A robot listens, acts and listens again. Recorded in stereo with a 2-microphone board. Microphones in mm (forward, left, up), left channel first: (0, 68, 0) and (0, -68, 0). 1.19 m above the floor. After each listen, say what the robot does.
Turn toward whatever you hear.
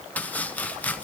Turn 30° left.
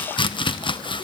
Turn 135° left.
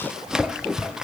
Found it: chopping, straight ahead, under 1 m away.